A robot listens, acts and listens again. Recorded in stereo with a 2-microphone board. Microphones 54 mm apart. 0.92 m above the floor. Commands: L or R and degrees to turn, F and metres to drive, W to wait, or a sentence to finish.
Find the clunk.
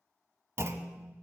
R50
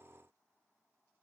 W
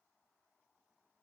I heard a clunk, but can't make it out now. It was about straight ahead or 80° right.